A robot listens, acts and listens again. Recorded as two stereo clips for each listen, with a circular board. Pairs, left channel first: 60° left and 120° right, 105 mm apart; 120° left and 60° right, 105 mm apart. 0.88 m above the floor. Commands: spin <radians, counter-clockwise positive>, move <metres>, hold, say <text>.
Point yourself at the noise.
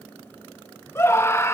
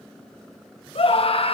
spin 2.09
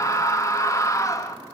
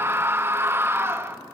say Facing the scream, under 1 m away.